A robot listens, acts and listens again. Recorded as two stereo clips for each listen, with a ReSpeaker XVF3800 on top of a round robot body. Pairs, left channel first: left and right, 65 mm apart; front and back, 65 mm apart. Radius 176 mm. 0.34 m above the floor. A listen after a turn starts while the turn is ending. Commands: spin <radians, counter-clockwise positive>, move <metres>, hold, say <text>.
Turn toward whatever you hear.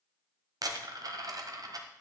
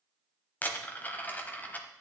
spin -1.13
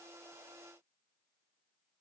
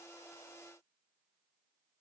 say Facing where the dropped coin came from. I can't hear it now.